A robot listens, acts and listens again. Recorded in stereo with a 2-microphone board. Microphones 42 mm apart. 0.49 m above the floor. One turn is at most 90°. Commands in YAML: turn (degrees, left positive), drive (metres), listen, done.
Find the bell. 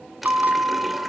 turn: -50
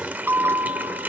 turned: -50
turn: -80
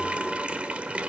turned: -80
listen: true
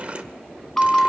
turn: 15
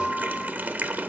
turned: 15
done: "Facing the bell, 1 to 2 m away."